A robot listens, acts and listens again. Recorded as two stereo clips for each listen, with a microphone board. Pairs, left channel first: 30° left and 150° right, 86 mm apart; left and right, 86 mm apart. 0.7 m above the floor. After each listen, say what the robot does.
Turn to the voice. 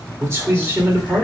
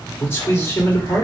Turn 145° left.
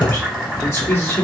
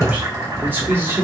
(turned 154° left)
Turn 30° right.
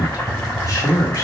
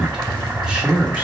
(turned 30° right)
Turn 15° right.
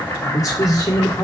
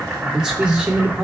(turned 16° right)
Turn 20° right.
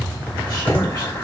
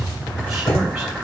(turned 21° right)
Keep listening.
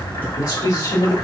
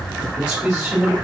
Turn 10° right.
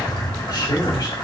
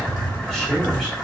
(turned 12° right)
Facing the man speaking.